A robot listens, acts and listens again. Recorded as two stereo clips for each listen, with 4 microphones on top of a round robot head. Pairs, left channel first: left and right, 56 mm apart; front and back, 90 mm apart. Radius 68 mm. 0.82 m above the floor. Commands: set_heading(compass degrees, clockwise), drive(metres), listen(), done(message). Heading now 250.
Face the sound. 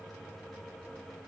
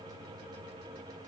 listen()
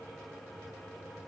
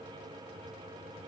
listen()
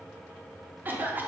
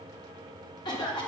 set_heading(285)
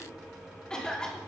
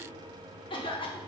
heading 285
set_heading(270)
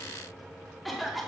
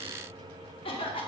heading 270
done("Facing the cough.")